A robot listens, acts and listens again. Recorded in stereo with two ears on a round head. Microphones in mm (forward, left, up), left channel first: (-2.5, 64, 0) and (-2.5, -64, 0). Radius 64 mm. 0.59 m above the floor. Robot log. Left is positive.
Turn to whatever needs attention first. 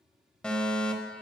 cmd yaw +30
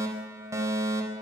note: So it is at 25° right.
cmd yaw -25
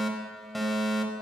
end: Found it: a fire alarm, straight ahead.